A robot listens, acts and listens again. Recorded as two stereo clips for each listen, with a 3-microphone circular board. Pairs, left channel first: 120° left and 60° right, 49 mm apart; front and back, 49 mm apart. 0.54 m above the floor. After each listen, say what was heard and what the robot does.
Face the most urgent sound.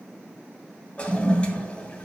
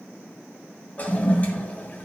Keep listening.
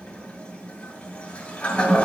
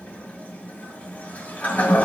Keep listening.
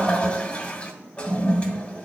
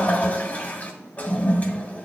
I can't make out anything urgent to turn to.